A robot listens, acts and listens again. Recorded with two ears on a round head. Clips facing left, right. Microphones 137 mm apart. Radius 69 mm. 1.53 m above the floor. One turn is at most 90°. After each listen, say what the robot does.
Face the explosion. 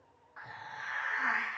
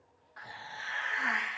Keep listening.
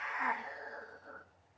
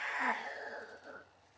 Keep listening.
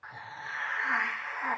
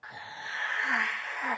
I can't make out an explosion to turn to.